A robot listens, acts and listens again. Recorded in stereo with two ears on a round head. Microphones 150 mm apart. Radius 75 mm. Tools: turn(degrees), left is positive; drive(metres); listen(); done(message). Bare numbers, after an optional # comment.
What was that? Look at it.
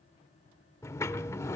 # The sliding door: about 20° left or 160° left.
turn(20)
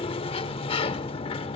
# So it is at 140° left.
turn(140)
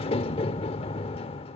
# The sliding door is now 40° left.
turn(40)
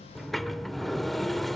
done("Found it: a sliding door, straight ahead.")